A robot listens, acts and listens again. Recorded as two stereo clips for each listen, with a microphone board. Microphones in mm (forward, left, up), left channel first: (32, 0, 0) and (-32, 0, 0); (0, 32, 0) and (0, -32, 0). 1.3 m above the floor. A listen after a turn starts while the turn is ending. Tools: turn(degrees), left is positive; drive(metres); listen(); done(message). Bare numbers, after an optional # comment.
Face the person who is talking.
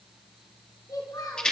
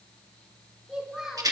# The child speaking: 10° right.
turn(-10)
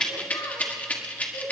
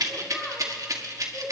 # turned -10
listen()
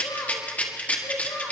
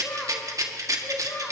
# The child speaking is now 40° left.
turn(40)
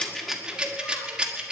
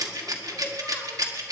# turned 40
listen()
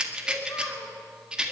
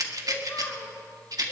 # The child speaking is now 30° left.
turn(30)
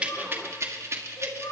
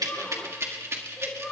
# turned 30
done("Facing the child speaking.")